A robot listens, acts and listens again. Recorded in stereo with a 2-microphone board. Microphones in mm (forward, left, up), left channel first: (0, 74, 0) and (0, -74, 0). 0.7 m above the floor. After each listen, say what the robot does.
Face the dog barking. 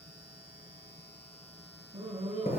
Turn 40° right.
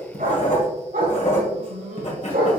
Turn 95° right.
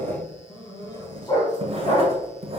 Turn 30° left.
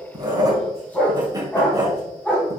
Turn 10° left.
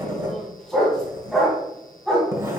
Found it: a dog barking, straight ahead.